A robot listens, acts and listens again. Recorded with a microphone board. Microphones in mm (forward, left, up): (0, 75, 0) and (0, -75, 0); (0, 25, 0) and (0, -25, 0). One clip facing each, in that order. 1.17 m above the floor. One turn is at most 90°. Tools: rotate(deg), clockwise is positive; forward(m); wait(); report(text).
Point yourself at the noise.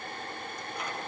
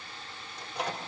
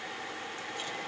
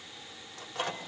rotate(90)
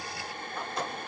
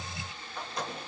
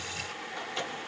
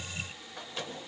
report("Found it: a microwave, straight ahead.")